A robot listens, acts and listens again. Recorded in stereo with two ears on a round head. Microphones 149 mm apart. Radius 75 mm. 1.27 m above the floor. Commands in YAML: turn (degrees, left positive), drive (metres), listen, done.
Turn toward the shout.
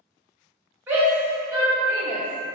turn: -30
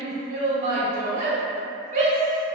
turn: -135
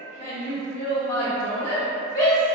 turn: 15
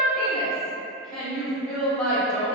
done: "Found it: a shout, straight ahead, 1 to 2 m away."